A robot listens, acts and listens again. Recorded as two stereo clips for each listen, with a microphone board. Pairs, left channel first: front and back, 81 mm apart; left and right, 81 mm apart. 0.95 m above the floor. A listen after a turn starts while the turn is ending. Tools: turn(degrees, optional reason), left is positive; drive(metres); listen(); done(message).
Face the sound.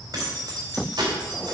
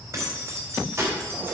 turn(degrees=-155, reason="The keys jangling: 155° right.")
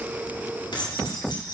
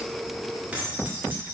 turn(degrees=-25, reason="The keys jangling is now 25° right.")
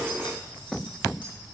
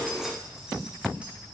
listen()
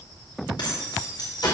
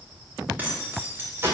turn(degrees=-30, reason="The keys jangling is now 30° right.")
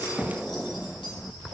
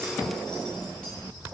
listen()
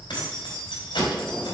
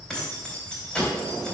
turn(degrees=10, reason="The keys jangling is now 10° left.")
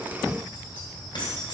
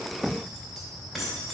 done("Found it: keys jangling, straight ahead, 2 to 4 m away.")